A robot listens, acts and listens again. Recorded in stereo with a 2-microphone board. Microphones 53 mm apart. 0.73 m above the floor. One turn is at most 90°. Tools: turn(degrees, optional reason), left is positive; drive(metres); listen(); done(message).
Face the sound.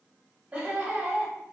turn(degrees=-20, reason="The laughter: about 20° right or 160° right.")
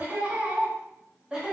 turn(degrees=-30)
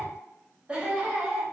turn(degrees=-30)
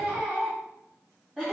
turn(degrees=-30)
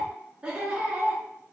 turn(degrees=-30, reason="The laughter: about 30° right or 150° right.")
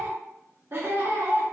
turn(degrees=-90, reason="So it is at 130° right.")
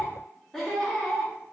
turn(degrees=10, reason="The laughter is now 10° left.")
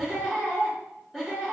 done("Facing the laughter, 1 to 2 m away.")